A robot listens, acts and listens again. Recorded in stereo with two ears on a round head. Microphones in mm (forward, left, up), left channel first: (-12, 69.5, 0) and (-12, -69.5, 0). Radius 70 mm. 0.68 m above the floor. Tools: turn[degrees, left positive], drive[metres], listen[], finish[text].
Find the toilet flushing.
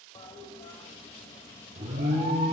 Thought: The toilet flushing: about 35° left or 145° left.
Action: turn[35]
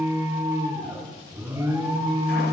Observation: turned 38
Action: listen[]
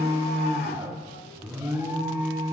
Action: listen[]
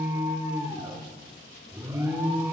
Action: finish[I heard a toilet flushing, but can't make it out now. It was about 5° right or 110° left.]